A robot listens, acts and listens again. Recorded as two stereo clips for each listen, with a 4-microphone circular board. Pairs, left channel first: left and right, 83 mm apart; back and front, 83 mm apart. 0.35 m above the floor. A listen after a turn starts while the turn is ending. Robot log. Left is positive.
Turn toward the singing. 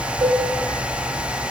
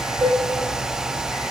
cmd idle
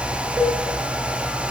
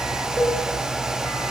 cmd idle
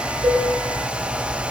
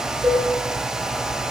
end: I can't make out singing to turn to.